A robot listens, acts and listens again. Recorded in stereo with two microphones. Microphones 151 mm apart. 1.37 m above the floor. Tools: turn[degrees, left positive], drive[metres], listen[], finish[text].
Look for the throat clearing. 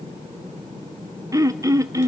Thought: The throat clearing: about 20° right or 160° right.
Action: turn[-20]
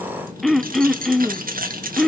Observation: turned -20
Action: finish[Found it: throat clearing, straight ahead, under 1 m away.]